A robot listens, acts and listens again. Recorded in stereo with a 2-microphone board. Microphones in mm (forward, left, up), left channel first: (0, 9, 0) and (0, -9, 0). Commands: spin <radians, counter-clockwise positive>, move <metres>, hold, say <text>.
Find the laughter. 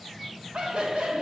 spin -1.31
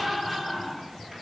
say Facing the laughter, 1 to 2 m away.